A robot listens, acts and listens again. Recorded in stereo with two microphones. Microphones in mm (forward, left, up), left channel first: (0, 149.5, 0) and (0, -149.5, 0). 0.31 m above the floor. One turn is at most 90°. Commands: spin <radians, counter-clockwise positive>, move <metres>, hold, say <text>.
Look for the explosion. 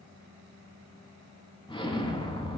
spin 0.26
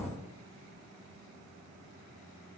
say Found it: an explosion, straight ahead.